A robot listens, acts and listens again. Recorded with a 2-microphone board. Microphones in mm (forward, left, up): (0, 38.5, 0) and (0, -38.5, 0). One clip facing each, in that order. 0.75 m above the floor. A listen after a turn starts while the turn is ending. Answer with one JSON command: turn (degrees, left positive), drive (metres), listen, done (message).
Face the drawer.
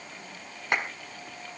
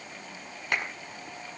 {"listen": true}
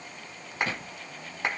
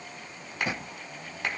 {"turn": -20}
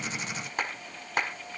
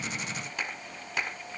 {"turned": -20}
{"listen": true}
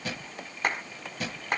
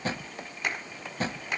{"turn": -145}
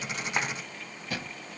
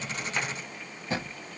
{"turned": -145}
{"turn": -25}
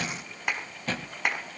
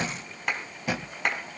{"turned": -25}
{"turn": -10}
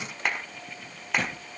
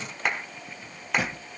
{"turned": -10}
{"done": "Facing the drawer."}